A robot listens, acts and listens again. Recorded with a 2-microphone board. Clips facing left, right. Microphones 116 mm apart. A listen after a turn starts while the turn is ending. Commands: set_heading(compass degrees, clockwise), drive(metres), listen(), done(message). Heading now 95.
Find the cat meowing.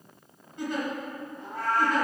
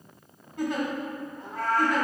set_heading(140)
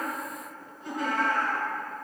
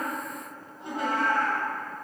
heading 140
set_heading(240)
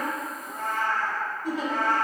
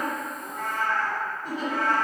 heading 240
set_heading(210)
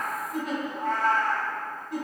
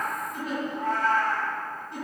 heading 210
set_heading(190)
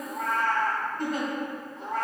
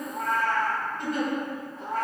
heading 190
done("Found it: a cat meowing, straight ahead, 2 to 4 m away.")